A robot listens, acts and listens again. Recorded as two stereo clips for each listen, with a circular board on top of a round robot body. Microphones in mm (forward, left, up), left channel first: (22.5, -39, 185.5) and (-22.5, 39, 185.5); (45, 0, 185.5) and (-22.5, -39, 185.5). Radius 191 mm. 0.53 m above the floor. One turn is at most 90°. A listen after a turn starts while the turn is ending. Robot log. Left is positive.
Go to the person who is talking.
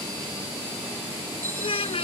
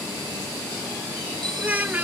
note: The child speaking: 80° right.
cmd yaw -80
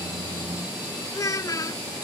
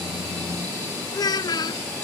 cmd fwd 1.0
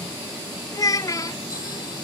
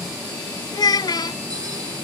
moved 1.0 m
cmd fwd 1.0
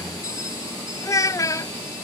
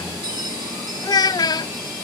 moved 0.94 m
cmd fwd 1.0
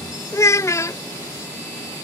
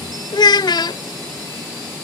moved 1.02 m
cmd fwd 1.0
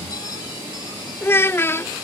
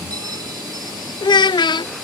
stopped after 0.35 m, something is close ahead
end: I am next to the child speaking.